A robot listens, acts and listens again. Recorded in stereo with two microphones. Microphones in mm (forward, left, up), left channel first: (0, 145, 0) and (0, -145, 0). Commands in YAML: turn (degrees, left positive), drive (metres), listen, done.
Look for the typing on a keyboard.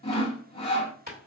turn: -30
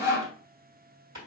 turn: -115
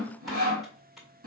done: "Facing the typing on a keyboard, 1 to 2 m away."